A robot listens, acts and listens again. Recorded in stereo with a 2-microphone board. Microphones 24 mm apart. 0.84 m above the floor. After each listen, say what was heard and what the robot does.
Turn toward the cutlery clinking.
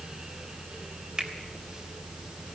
Keep listening.
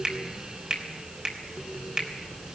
Keep listening.
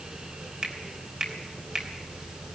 I can't make out cutlery clinking to turn to.